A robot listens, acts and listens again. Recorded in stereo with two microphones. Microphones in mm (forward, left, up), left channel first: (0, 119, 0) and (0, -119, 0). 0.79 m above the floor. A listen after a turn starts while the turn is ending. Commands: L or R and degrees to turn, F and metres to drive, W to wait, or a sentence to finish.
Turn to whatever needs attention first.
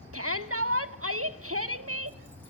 R65
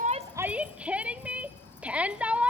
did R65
Found it: a shout, straight ahead, 1 to 2 m away.